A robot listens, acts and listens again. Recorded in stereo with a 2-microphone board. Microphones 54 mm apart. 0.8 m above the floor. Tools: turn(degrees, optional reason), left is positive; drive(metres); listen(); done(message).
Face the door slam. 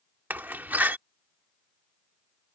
turn(degrees=-35, reason="The door slam: about 35° right or 145° right.")
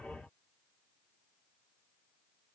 listen()
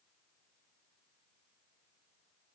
done("I heard a door slam, but can't make it out now. It was about straight ahead or 110° right.")